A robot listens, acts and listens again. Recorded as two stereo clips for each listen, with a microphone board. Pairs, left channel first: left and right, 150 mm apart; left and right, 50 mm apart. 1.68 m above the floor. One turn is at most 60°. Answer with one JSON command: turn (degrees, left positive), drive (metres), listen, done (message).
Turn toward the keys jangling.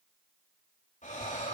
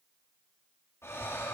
{"listen": true}
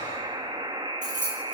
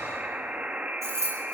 {"turn": -60}
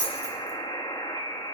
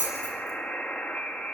{"turn": -55}
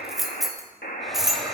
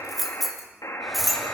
{"done": "Found it: keys jangling, straight ahead, 2 to 4 m away."}